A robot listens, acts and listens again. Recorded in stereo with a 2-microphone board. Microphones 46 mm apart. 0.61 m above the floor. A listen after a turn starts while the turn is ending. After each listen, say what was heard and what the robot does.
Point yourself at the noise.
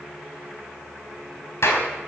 The clap: about 65° left or 115° left. Turn 65° left.
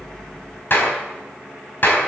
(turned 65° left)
So it is at 50° left. Turn 50° left.
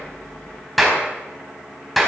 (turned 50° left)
Found it: a clap, straight ahead, over 4 m away.